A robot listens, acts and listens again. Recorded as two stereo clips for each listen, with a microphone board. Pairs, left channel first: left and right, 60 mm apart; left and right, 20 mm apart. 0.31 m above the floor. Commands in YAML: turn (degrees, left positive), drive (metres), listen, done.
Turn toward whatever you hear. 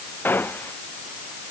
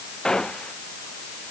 turn: 30
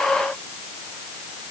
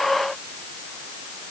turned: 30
listen: true
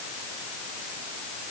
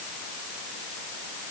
done: "I heard a gunshot, but can't make it out now. It was about straight ahead or 120° left."